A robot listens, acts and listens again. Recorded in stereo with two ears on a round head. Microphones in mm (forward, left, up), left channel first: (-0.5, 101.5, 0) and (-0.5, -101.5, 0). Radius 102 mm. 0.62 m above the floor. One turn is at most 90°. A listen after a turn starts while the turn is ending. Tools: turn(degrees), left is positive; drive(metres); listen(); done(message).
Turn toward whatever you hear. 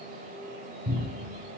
turn(degrees=-90)
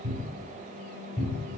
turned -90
done("Facing the cupboard door.")